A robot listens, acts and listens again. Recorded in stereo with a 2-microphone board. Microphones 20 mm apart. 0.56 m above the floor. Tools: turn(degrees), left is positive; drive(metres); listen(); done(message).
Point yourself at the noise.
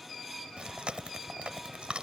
turn(degrees=-65)
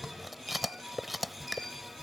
done("Found it: chewing, straight ahead.")